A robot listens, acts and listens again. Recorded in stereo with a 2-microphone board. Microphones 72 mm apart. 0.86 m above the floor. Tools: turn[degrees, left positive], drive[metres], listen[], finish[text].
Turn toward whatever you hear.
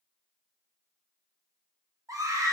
Thought: The scream: about 50° right or 130° right.
Action: turn[-50]
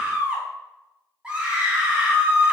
Thought: So it is at 20° right.
Action: turn[-20]
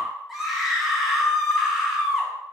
Action: finish[Facing the scream.]